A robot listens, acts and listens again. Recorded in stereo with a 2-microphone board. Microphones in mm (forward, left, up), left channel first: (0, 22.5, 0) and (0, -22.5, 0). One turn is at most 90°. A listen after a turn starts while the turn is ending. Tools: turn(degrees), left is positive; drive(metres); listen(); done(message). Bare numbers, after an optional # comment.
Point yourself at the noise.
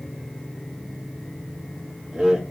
# The laughter: about 20° right or 160° right.
turn(-20)
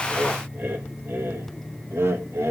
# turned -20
# So it is at 105° right.
turn(-90)
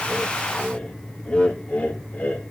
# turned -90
# The laughter is now 35° left.
turn(35)
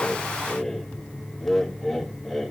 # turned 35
done("Facing the laughter.")